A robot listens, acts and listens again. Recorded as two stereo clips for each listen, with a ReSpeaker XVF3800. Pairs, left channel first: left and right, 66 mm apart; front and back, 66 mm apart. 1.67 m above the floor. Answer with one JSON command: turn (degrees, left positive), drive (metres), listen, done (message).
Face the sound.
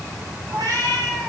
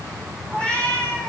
{"turn": -75}
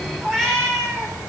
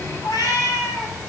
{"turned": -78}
{"done": "Facing the cat meowing."}